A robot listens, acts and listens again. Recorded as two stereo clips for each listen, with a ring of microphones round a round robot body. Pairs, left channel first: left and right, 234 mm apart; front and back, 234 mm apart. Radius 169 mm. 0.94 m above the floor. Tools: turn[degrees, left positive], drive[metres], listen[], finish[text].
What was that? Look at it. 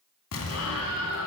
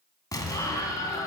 Thought: The explosion: 75° left.
Action: turn[75]
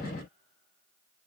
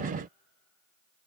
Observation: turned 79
Action: finish[I heard an explosion from this way, but can't make it out now.]